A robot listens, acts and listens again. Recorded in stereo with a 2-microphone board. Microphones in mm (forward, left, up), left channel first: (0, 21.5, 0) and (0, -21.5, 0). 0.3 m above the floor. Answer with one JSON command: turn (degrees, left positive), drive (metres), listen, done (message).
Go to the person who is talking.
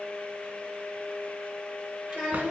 {"turn": -30}
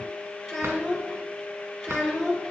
{"drive": 1.0}
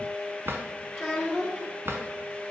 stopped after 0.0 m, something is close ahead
{"done": "Blocked. The child speaking is further on, straight ahead."}